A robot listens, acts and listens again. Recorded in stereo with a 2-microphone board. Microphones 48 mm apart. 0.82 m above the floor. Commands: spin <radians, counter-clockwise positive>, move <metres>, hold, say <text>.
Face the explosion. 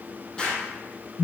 spin 0.35
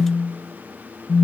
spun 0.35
hold
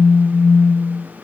say I heard an explosion, but can't make it out now. It was about straight ahead or 140° left.